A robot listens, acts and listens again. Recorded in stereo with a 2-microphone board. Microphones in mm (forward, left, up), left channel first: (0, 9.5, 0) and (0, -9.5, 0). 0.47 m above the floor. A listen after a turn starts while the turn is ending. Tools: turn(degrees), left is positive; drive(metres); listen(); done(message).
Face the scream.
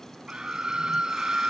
turn(degrees=-40)
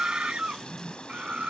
turn(degrees=-100)
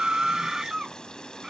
turn(degrees=-35)
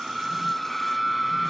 done("Found it: a scream, straight ahead.")